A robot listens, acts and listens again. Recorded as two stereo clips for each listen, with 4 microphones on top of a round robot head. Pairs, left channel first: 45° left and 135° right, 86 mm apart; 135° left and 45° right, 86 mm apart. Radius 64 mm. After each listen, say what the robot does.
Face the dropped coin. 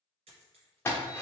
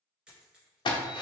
Turn 125° right.
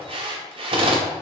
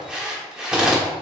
Facing where the dropped coin came from. I can't hear it now.